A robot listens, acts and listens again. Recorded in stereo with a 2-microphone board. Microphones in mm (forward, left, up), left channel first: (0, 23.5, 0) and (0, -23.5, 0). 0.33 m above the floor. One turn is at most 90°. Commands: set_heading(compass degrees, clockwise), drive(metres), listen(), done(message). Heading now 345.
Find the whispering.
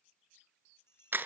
listen()
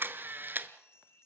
listen()
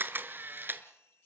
done("I can't make out whispering, only a camera shutter and a bell.")